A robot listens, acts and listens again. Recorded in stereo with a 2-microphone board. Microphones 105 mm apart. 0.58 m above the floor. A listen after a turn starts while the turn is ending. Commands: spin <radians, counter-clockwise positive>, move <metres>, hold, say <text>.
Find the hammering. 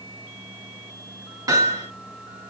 spin -0.61
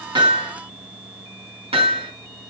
spin -1.92
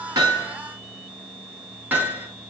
spin -0.26
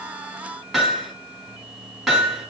say Found it: hammering, straight ahead.